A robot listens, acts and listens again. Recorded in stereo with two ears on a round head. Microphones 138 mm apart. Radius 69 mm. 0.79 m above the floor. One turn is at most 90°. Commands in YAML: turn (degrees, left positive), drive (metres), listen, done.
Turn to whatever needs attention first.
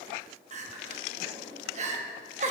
turn: -50
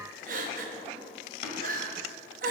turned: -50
turn: -70
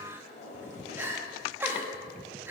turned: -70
turn: -15
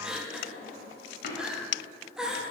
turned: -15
done: "Facing the crying."